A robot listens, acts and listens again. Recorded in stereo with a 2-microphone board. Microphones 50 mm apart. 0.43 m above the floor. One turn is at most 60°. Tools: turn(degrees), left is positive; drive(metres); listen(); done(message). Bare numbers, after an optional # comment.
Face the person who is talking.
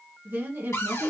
# The woman speaking: about 40° right or 140° right.
turn(-40)
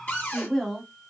done("Found it: a woman speaking, straight ahead.")